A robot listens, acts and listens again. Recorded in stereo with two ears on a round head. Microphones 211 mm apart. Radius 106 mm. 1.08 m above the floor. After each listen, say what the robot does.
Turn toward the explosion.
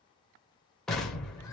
Turn 30° left.
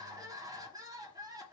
Keep listening.
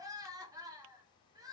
I heard an explosion, but can't make it out now. It was about 30° right or 150° left.